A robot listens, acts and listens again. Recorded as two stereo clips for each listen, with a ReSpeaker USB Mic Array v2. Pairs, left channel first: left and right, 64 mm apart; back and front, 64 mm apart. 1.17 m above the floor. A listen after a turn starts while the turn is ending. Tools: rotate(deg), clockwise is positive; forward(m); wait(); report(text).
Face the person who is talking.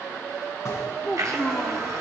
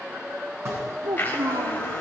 rotate(-10)
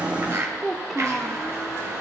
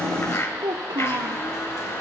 report("Found it: a child speaking, straight ahead, 1 to 2 m away.")